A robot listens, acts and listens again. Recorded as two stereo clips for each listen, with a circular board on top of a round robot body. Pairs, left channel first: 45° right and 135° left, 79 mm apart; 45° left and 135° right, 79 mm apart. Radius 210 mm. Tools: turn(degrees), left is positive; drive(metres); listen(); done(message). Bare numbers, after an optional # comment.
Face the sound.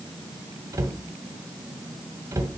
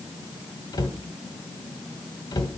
# The cupboard door: 85° left.
turn(85)
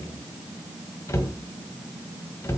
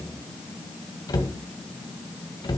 # The cupboard door is now 10° left.
turn(10)
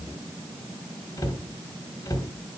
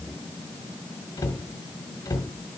done("Facing the cupboard door.")